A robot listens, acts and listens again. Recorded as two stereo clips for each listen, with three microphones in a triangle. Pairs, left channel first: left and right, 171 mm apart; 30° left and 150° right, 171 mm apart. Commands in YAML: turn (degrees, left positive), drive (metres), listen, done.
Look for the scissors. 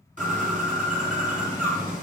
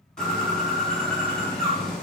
listen: true
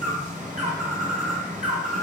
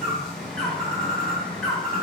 listen: true
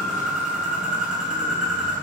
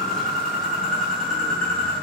done: "I can't make out scissors, only a bird."